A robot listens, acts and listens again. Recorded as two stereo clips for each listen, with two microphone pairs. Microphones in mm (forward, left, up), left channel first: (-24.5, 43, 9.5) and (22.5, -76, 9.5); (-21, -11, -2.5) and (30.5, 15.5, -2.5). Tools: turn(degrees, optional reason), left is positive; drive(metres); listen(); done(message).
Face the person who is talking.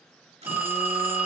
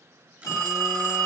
listen()
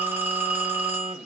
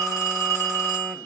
listen()
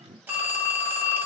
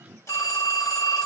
done("I can't make out anyone speaking, only a phone buzzing and a phone ringing.")